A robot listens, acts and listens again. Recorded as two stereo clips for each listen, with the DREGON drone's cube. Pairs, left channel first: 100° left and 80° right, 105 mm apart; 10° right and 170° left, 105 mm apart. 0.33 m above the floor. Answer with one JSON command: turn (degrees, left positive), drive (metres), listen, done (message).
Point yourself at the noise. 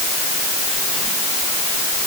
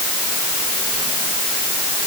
{"listen": true}
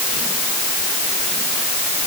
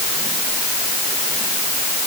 {"listen": true}
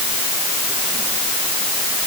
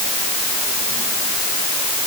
{"done": "I can't make out anything to turn to."}